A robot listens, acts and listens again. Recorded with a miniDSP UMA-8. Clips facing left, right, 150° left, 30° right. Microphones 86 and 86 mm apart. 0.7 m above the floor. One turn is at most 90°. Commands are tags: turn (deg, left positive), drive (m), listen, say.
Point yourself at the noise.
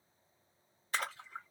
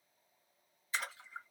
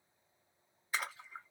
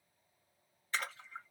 <turn deg="75"/>
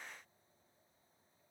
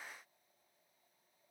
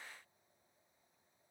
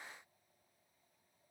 <say>I heard a splash from this way, but can't make it out now.</say>